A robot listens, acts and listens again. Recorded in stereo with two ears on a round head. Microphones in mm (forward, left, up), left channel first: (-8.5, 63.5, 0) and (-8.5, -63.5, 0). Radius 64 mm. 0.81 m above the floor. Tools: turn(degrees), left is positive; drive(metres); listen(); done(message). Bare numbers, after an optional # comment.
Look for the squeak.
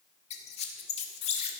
# The squeak: about 45° left or 135° left.
turn(45)
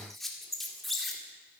done("Found it: a squeak, straight ahead.")